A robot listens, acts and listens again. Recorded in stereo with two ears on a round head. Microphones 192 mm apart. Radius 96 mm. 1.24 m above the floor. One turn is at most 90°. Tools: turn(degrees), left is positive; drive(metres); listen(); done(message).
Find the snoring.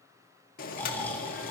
turn(degrees=30)
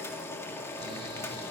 listen()
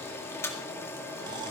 listen()
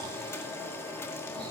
done("I heard snoring, but can't make it out now. It was about 20° right or 140° left.")